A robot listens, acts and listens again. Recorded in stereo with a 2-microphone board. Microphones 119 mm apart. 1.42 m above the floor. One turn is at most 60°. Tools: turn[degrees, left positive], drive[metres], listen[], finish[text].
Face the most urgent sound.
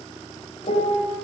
Action: listen[]
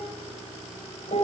Action: listen[]
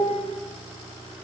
Action: finish[I can't make out anything urgent, only a piano.]